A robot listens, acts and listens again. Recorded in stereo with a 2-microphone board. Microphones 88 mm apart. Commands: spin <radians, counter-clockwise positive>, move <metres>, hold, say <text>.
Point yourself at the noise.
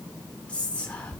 spin 0.26
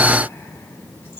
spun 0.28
hold
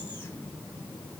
hold
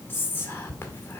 spin 2.62
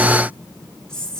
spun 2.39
spin 0.17
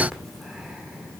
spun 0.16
say Facing the whispering, 1 to 2 m away.